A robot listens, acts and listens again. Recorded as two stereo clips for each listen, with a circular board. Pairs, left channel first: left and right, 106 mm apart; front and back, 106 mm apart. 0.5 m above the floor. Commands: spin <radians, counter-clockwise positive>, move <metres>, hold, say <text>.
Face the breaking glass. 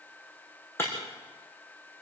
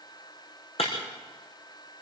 spin 0.44
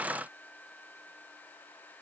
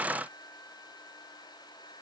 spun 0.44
say Facing where the breaking glass came from. I can't hear it now.